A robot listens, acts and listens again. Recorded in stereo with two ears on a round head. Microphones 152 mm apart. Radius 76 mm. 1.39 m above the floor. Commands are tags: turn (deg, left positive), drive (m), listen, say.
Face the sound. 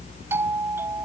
<turn deg="-30"/>
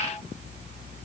<listen/>
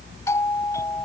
<turn deg="15"/>
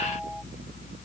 <say>Facing the doorbell.</say>